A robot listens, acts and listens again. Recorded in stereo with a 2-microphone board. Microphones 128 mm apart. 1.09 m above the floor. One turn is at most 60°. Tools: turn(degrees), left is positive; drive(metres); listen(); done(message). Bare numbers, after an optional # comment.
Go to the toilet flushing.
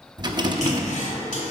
turn(60)
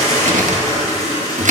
# So it is at 25° left.
turn(25)
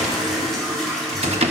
drive(1.0)
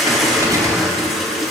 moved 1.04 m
drive(1.0)
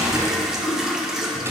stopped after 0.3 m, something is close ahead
done("Arrived at the toilet flushing, straight ahead.")